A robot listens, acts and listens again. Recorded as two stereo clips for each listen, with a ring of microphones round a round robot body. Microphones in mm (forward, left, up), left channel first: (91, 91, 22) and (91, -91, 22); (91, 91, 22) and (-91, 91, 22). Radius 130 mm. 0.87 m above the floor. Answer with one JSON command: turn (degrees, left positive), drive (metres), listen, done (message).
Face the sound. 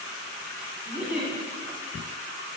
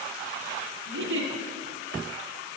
{"turn": -175}
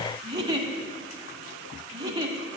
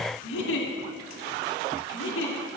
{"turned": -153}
{"turn": -20}
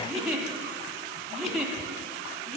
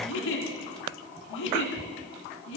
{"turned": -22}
{"done": "Found it: a giggle, straight ahead, 1 to 2 m away."}